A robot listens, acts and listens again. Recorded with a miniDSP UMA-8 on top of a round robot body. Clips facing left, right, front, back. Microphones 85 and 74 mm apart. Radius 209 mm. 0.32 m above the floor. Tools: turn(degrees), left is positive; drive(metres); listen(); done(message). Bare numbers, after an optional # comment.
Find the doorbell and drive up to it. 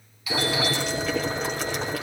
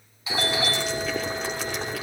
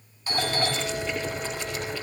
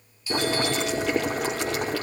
# The doorbell: 30° right.
turn(-30)
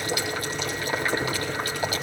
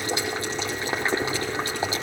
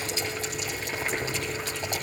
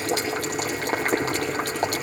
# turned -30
listen()
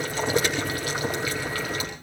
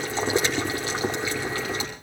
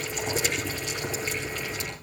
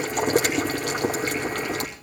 listen()
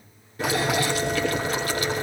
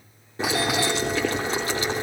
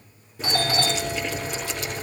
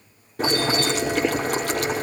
done("I heard a doorbell from this way, but can't make it out now. I did not reach it.")